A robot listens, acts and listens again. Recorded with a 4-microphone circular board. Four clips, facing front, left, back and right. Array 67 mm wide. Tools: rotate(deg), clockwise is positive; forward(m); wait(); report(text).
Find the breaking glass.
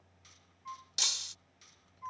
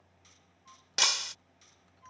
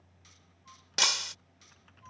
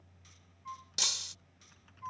rotate(-135)
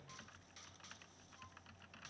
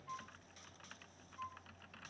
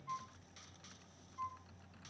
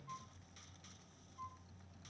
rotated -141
report("I heard breaking glass from this way, but can't make it out now.")